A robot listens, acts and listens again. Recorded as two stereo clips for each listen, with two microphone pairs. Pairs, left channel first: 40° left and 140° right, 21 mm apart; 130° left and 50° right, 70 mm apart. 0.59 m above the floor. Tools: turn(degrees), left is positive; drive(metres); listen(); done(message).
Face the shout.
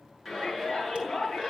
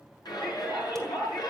turn(degrees=140)
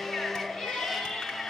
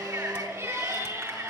done("Found it: a shout, straight ahead.")